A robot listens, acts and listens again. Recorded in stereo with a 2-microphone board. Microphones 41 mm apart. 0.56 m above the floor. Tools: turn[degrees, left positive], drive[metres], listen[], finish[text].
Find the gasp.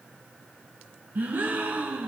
Thought: The gasp: about 45° right or 135° right.
Action: turn[-45]
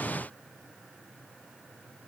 Action: listen[]
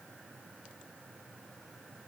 Action: finish[I heard a gasp, but can't make it out now. It was about straight ahead or 90° right.]